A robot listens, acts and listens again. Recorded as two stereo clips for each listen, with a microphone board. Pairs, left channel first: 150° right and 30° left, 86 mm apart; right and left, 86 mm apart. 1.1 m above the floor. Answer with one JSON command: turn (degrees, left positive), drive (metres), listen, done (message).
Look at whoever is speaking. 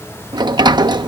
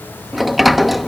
{"listen": true}
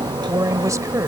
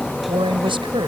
{"turn": 80}
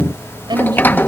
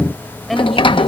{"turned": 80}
{"done": "Found it: a woman speaking, straight ahead."}